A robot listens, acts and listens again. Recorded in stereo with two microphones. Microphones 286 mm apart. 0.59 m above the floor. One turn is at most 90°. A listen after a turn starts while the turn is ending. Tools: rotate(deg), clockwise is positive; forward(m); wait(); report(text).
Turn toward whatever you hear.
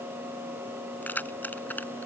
rotate(-30)
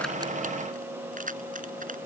rotate(30)
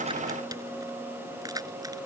rotate(15)
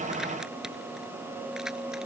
wait()
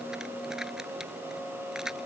report("Facing the keys jangling.")